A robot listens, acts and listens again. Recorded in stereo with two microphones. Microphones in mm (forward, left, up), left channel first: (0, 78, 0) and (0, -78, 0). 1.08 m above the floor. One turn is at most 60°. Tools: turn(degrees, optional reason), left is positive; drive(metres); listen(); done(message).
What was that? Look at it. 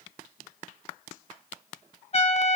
turn(degrees=45, reason="The trumpet: about 45° left or 135° left.")
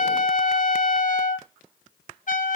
turn(degrees=60, reason="So it is at 85° left.")
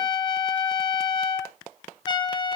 turn(degrees=35, reason="The trumpet is now 35° left.")
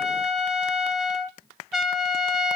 done("Facing the trumpet, 1 to 2 m away.")